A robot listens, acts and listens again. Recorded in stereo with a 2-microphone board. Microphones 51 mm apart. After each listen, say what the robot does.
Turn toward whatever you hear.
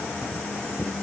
Keep listening.
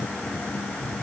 Keep listening.
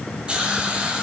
Turn 20° right.
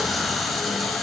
Keep listening.
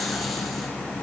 Keep listening.
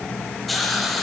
Found it: a hiss, straight ahead, 1 to 2 m away.